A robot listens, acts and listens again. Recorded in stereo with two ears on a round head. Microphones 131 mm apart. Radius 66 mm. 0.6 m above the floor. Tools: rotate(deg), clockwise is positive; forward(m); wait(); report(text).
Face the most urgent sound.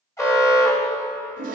rotate(-20)
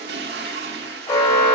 rotate(-135)
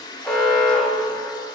report("Facing the alarm.")